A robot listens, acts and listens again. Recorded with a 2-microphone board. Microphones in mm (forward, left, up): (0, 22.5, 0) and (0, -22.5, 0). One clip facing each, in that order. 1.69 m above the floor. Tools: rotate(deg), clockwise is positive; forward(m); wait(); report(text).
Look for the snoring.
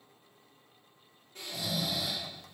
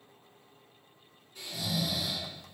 rotate(-50)
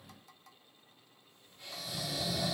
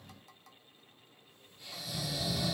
rotate(-70)
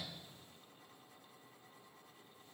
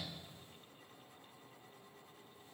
wait()
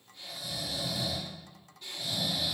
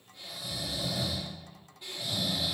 rotate(15)
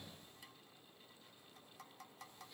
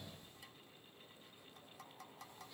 wait()
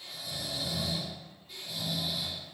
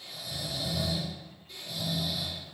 report("Facing the snoring, 1 to 2 m away.")